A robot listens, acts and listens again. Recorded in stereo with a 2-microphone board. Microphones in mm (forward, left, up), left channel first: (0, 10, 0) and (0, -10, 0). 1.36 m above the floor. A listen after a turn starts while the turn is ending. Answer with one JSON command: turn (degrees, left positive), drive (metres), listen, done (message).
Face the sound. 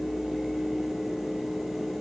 {"listen": true}
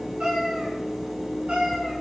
{"turn": -60}
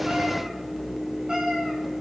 {"turn": -35}
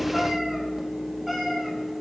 {"done": "Found it: a cat meowing, straight ahead, 2 to 4 m away."}